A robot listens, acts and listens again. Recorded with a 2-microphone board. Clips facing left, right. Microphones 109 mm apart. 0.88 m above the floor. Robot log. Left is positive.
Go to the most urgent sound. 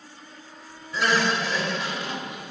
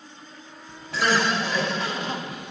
note: The crying: about 20° left or 160° left.
cmd yaw +20
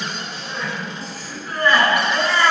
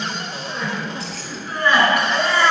cmd fwd 1.0
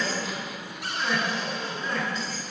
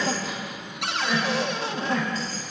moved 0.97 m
cmd fwd 1.0
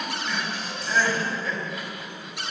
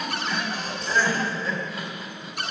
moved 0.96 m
cmd fwd 1.0
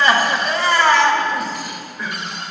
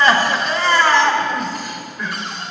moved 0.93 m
cmd fwd 1.0
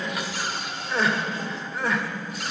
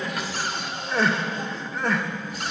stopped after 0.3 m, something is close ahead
end: I am next to the crying.